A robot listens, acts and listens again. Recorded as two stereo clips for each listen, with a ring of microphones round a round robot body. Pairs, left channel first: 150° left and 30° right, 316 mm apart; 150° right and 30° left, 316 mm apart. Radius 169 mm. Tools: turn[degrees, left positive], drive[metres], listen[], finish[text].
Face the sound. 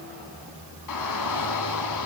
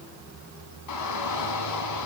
Thought: The shout: straight behind.
Action: turn[180]
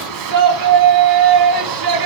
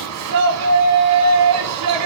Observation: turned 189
Thought: The shout is now 10° right.
Action: turn[-10]
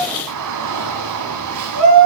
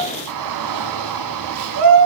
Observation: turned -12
Action: finish[Facing the shout.]